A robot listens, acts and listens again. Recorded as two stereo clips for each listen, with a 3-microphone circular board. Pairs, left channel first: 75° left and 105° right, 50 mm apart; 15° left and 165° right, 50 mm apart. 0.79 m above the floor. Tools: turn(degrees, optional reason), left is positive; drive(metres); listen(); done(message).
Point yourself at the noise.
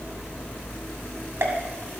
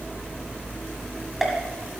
turn(degrees=-80, reason="The pop: 80° right.")
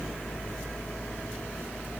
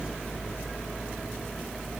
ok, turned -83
done("I heard a pop from this way, but can't make it out now.")